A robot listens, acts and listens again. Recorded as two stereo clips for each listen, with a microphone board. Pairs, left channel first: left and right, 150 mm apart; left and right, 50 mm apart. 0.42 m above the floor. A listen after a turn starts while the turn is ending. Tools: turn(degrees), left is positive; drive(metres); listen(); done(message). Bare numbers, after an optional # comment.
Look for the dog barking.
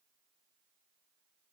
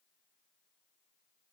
listen()
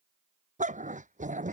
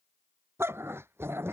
# The dog barking: about 55° right or 125° right.
turn(-55)
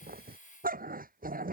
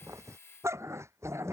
# So it is at 70° right.
turn(-70)
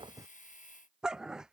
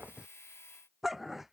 done("Found it: a dog barking, straight ahead.")